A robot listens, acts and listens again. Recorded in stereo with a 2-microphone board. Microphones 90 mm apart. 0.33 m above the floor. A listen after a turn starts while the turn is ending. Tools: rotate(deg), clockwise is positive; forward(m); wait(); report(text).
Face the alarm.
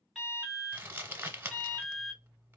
rotate(-30)
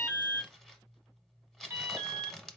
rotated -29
rotate(30)
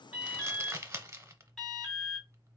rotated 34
report("Facing the alarm.")